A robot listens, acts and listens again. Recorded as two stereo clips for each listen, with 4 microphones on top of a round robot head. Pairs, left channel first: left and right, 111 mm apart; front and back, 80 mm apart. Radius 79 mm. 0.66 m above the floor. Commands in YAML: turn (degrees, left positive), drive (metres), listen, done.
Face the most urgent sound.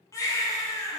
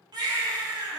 turn: 150
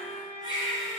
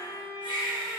turn: -30
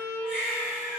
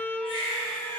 turn: -10
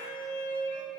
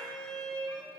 listen: true
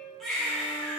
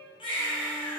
done: "Found it: a baby crying, straight ahead, 2 to 4 m away."